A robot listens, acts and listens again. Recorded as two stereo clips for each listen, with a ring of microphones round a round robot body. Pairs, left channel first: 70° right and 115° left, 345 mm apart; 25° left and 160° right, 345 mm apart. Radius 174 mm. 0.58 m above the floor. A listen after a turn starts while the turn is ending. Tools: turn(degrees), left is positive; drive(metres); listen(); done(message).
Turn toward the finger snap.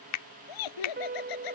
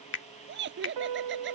turn(degrees=-30)
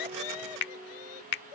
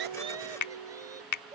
turn(degrees=-10)
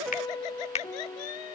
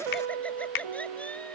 done("Facing the finger snap.")